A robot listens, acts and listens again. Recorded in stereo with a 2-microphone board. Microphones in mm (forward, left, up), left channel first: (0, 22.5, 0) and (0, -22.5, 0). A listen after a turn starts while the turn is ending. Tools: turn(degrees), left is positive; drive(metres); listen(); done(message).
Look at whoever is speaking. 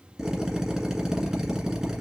listen()
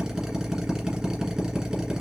listen()
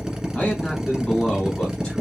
turn(degrees=15)
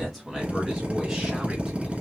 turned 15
turn(degrees=30)
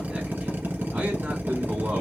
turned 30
turn(degrees=-35)
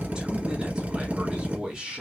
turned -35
turn(degrees=-15)
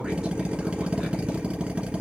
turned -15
listen()
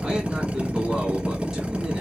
listen()
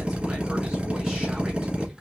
done("I heard a man speaking from this way, but can't make it out now.")